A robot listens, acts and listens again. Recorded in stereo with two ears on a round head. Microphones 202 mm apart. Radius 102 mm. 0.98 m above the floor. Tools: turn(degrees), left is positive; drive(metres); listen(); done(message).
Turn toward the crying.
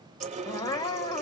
turn(degrees=15)
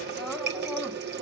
listen()
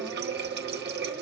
listen()
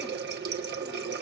done("I heard crying, but can't make it out now. It was about straight ahead or 150° left.")